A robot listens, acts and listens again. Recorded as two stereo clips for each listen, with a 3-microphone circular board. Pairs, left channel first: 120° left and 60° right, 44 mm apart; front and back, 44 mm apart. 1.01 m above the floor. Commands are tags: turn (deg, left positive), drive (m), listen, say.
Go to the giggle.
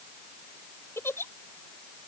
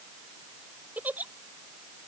<turn deg="130"/>
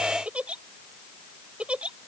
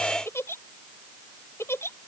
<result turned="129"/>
<drive m="1.0"/>
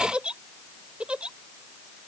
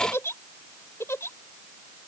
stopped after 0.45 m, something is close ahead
<say>Blocked. The giggle is further on, straight ahead.</say>